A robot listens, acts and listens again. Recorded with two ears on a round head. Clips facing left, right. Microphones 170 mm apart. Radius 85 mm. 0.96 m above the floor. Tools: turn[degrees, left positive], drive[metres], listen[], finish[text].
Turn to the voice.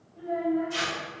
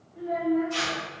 Thought: The child speaking: about 30° right or 150° right.
Action: turn[-30]
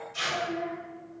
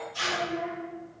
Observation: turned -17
Thought: So it is at 10° right.
Action: turn[-10]
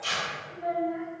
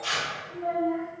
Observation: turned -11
Action: finish[Facing the child speaking.]